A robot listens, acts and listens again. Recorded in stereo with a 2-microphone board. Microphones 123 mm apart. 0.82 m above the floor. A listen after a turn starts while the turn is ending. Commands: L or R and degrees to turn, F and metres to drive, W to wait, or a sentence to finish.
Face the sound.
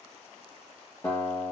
L15
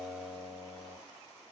L150
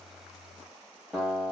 Found it: a guitar, straight ahead.